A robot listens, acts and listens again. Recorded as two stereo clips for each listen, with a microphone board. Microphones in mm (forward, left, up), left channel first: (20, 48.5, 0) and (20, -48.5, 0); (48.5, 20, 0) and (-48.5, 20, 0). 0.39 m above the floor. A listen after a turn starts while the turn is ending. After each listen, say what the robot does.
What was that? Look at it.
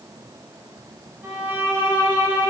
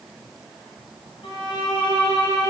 Turn 20° right.
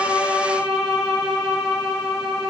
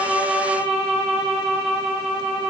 Found it: a violin, straight ahead, 1 to 2 m away.